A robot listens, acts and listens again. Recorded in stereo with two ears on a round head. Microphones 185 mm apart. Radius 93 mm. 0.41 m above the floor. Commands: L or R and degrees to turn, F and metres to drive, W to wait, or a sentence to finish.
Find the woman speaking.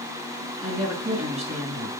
R35
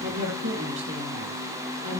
R110
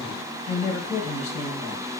L30
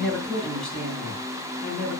Facing the woman speaking.